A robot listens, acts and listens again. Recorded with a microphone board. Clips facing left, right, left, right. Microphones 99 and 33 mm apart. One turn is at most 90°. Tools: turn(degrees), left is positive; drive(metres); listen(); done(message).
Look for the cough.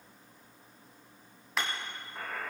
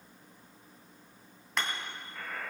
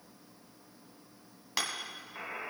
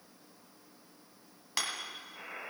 listen()
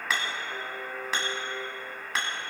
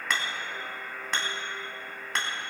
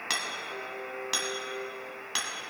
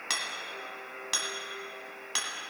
listen()
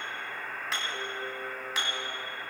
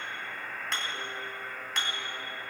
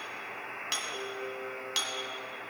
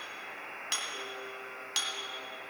done("I can't make out a cough to turn to.")